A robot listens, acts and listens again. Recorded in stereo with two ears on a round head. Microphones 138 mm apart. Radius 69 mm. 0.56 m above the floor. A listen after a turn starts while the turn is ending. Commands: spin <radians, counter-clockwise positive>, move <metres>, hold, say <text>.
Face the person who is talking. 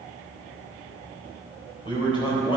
spin 0.61
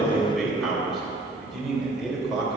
say Found it: a man speaking, straight ahead.